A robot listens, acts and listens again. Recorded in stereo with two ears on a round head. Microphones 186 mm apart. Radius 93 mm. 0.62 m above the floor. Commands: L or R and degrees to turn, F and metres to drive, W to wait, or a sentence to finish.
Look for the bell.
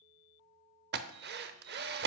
W
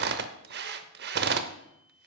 W
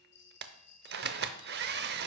L55
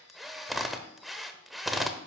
W
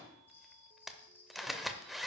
L10
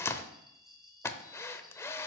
Facing the bell, 1 to 2 m away.